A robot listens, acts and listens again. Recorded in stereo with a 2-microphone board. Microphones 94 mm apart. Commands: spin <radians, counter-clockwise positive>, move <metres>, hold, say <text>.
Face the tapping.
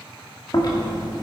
hold
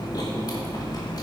hold
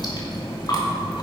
say I can't make out tapping, only chewing.